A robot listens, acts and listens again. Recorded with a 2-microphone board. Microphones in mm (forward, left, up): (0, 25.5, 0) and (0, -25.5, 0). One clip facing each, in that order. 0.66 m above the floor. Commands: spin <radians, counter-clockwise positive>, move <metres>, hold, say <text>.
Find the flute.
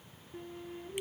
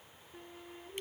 spin 0.52
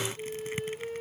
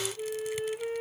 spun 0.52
spin -0.52
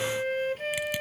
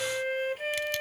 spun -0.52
say Facing the flute.